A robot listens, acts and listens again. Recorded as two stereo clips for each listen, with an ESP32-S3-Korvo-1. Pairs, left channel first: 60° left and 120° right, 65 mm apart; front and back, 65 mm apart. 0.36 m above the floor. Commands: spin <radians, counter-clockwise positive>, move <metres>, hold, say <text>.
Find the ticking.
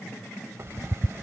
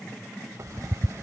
spin -2.71
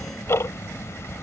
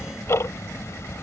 spin 0.52
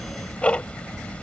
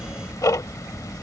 say Facing the ticking.